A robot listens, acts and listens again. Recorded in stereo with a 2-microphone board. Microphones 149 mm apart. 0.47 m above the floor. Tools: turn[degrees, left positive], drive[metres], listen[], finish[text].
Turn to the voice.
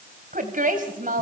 Thought: The woman speaking: about 65° right or 115° right.
Action: turn[-65]
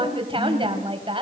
Thought: So it is at 40° right.
Action: turn[-40]
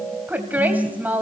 Thought: The woman speaking is now 10° right.
Action: turn[-10]
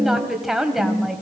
Action: finish[Found it: a woman speaking, straight ahead, 2 to 4 m away.]